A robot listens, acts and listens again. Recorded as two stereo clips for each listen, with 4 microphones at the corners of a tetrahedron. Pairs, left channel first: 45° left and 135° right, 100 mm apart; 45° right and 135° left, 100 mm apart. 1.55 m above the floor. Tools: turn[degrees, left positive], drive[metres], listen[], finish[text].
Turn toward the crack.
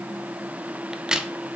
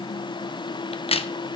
Thought: The crack: 50° right.
Action: turn[-50]
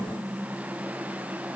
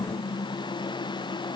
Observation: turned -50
Action: finish[I heard a crack from this way, but can't make it out now.]